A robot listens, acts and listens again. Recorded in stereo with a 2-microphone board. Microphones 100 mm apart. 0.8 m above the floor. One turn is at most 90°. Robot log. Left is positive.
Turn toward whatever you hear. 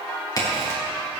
note: The crack: about 40° left or 140° left.
cmd yaw +40
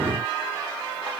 cmd idle
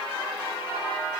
end: I heard a crack, but can't make it out now. It was about straight ahead or 100° left.